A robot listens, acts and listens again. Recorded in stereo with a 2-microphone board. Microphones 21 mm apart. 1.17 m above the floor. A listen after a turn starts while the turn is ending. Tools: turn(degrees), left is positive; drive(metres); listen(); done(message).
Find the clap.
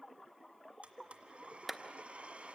turn(degrees=30)
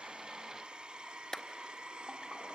turn(degrees=150)
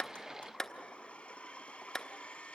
turn(degrees=20)
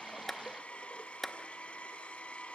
done("Facing the clap, 1 to 2 m away.")